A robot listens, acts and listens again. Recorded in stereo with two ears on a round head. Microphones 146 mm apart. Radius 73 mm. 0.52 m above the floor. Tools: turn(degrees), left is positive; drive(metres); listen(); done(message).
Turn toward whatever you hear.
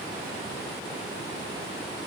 listen()
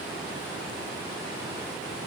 listen()
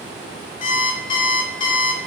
turn(degrees=35)
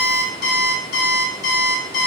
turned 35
turn(degrees=110)
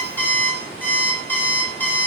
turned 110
turn(degrees=10)
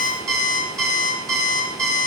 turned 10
done("Found it: an alarm clock, straight ahead.")